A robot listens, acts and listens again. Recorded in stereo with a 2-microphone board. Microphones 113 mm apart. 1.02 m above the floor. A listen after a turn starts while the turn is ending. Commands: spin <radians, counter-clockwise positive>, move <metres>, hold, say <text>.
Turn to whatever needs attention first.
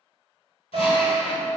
spin -0.96
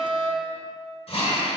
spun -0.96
spin -0.96
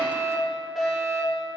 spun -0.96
say Found it: a fire alarm, straight ahead.